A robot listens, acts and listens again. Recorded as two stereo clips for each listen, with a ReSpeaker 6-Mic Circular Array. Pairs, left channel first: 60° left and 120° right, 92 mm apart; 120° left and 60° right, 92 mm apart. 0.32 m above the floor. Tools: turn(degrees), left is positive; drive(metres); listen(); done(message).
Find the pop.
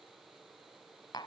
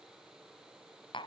listen()
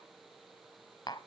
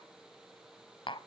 listen()
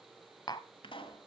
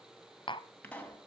turn(degrees=45)
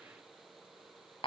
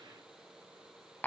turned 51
done("I heard a pop from this way, but can't make it out now.")